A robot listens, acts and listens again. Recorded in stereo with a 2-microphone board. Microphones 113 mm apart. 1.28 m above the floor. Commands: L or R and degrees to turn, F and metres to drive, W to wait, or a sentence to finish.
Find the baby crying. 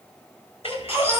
R20
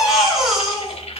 Found it: a baby crying, straight ahead, 2 to 4 m away.